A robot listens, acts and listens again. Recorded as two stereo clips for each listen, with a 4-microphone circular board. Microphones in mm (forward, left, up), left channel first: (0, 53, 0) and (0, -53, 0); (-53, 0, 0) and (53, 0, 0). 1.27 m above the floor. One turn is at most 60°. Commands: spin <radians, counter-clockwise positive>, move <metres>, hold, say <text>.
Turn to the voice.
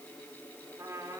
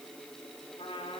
hold
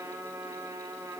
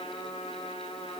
hold
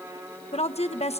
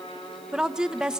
spin 1.05
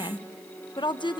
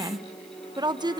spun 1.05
spin 0.87
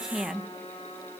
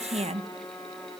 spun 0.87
say Found it: a woman speaking, straight ahead, 1 to 2 m away.